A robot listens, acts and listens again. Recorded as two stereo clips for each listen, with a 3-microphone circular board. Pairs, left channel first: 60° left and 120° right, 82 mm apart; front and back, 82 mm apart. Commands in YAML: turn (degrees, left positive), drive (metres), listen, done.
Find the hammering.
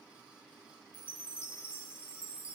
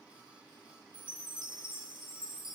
listen: true
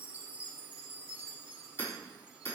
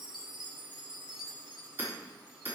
turn: 120
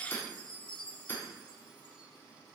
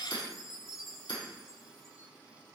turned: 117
done: "Facing the hammering, over 4 m away."